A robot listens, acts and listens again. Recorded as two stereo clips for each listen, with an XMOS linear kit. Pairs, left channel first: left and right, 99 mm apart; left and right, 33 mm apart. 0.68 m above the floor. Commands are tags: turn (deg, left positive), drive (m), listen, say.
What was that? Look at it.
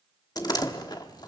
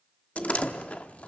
<turn deg="40"/>
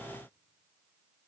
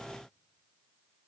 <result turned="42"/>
<listen/>
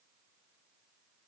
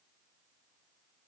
<say>I heard a door slam, but can't make it out now. It was about 5° right or 100° left.</say>